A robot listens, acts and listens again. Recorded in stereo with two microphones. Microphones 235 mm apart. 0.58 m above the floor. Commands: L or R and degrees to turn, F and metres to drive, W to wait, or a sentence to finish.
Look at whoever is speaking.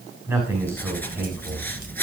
R30
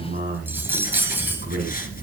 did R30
R140
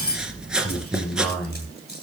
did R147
Facing the man speaking.